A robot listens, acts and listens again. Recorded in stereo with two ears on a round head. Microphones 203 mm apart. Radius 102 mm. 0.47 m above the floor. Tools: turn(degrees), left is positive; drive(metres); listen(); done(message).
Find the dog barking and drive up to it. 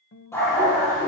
turn(degrees=30)
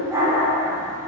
turn(degrees=-15)
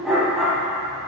drive(metres=1.0)
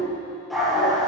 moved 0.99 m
drive(metres=1.0)
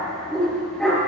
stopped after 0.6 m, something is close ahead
done("Blocked. The dog barking is further on, straight ahead.")